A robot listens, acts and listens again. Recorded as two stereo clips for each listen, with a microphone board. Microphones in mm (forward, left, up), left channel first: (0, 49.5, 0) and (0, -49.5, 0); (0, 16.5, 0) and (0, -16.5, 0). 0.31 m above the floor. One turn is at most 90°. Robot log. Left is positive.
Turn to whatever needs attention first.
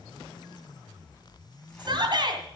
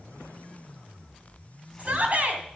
note: The shout: about 50° right or 130° right.
cmd yaw -50
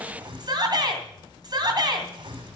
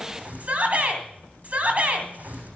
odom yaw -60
note: So it is at 55° right.
cmd yaw -55
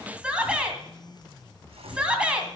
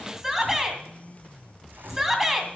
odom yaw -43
note: The shout is now 15° right.
cmd yaw -15
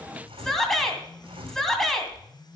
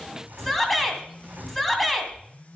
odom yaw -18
end: Facing the shout.